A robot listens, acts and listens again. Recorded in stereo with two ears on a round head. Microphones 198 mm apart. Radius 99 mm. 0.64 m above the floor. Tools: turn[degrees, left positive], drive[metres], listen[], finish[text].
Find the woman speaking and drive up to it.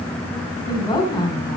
Thought: The woman speaking: about 20° left or 160° left.
Action: turn[20]
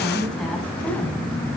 Action: drive[1.0]
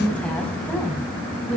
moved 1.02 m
Action: drive[1.0]
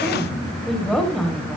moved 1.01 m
Action: drive[1.0]
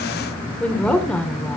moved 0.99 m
Action: drive[1.0]
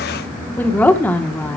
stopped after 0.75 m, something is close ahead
Thought: The woman speaking is now 10° left.
Action: turn[10]
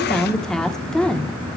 Action: finish[I am next to the woman speaking.]